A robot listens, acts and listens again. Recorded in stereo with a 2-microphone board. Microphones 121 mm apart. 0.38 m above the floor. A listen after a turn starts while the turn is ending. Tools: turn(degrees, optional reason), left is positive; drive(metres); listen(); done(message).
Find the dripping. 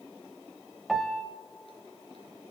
listen()
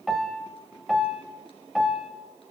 listen()
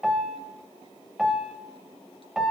done("I can't make out dripping, only a piano.")